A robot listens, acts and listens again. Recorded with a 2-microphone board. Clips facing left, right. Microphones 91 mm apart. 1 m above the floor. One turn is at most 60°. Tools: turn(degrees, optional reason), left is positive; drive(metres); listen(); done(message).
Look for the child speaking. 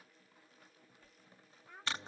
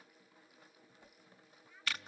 turn(degrees=60, reason="The child speaking: about 60° left or 120° left.")
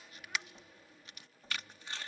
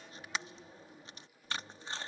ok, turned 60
listen()
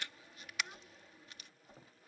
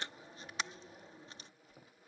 listen()
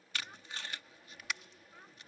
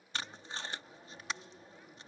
done("I heard a child speaking, but can't make it out now. It was about straight ahead or 60° left.")